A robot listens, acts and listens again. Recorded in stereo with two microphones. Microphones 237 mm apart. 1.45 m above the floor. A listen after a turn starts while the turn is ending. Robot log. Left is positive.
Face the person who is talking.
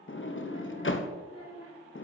note: The child speaking: about 75° right or 105° right.
cmd yaw -75
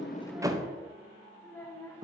note: So it is at 10° left.
cmd yaw +10
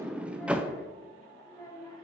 note: The child speaking is now 15° left.
cmd yaw +15
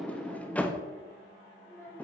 note: The child speaking is now 10° left.
cmd yaw +10
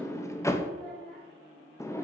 end: Facing the child speaking.